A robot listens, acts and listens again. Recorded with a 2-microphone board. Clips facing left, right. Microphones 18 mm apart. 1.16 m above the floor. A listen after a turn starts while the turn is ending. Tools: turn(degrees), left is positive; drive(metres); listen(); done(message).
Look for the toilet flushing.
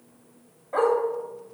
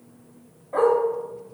listen()
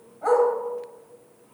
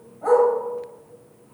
listen()
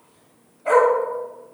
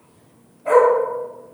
done("I can't make out a toilet flushing to turn to.")